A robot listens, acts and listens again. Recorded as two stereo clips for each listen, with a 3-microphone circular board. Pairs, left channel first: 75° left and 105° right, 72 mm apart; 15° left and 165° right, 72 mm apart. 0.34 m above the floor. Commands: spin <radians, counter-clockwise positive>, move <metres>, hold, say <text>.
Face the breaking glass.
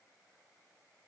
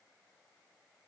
hold
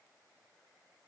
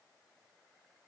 hold
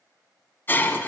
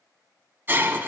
spin 2.36
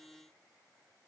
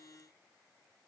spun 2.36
say I heard breaking glass from this way, but can't make it out now.